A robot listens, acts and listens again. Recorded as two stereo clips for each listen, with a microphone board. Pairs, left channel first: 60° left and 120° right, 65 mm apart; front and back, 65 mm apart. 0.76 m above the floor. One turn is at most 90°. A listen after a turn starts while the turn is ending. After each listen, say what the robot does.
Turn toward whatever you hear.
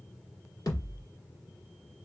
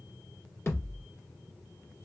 Turn 50° left.
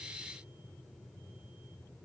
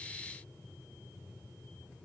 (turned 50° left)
I heard a thud from this way, but can't make it out now.